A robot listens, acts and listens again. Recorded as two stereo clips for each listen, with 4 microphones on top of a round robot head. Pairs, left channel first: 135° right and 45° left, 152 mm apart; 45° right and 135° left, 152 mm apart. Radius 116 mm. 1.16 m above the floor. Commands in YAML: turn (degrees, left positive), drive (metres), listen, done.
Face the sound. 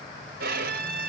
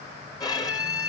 turn: 20
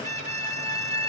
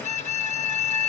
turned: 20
done: "Found it: a violin, straight ahead, 1 to 2 m away."